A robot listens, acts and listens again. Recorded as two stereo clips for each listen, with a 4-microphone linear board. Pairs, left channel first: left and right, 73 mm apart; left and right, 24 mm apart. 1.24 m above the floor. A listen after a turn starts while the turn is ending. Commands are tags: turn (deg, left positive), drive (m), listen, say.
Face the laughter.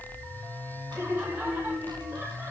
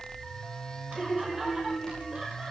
<turn deg="-30"/>
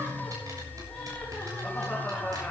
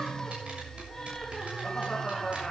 <say>Found it: laughter, straight ahead.</say>